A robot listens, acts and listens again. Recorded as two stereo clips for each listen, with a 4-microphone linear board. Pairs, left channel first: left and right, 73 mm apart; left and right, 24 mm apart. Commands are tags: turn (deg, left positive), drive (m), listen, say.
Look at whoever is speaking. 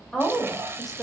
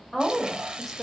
<turn deg="-30"/>
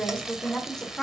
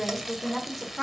<turn deg="30"/>
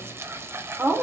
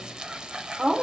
<turn deg="-30"/>
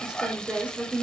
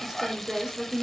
<turn deg="-25"/>
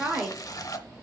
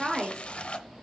<say>Found it: a woman speaking, straight ahead, 1 to 2 m away.</say>